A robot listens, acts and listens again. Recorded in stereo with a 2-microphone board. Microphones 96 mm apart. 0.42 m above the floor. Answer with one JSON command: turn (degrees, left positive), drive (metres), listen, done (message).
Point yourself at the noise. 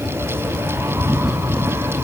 {"listen": true}
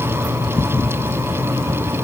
{"listen": true}
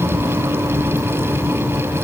{"done": "I can't make out anything."}